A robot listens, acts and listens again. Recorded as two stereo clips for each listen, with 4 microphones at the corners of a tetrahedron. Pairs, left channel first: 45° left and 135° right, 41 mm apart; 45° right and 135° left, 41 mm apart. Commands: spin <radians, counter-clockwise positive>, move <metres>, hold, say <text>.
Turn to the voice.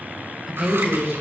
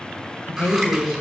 spin -1.13
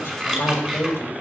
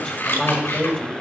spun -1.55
spin 0.44
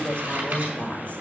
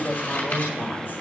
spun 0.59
spin -0.17
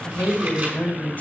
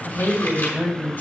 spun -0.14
say Found it: a woman speaking, straight ahead, 2 to 4 m away.